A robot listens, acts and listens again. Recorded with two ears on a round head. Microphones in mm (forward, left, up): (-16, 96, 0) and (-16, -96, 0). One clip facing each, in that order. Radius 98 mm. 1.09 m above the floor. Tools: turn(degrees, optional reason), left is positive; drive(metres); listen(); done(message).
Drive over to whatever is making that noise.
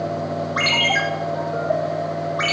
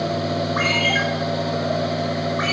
turn(degrees=40, reason="The ringtone: about 40° left or 140° left.")
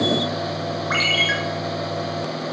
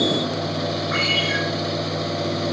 turn(degrees=100, reason="So it is at 100° left.")
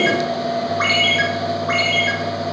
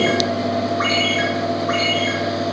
turn(degrees=35, reason="The ringtone is now 35° left.")
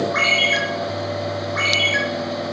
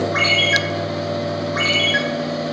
drive(metres=1.0)
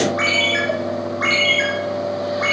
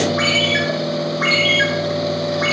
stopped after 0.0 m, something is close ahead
done("Blocked. The ringtone is further on, straight ahead.")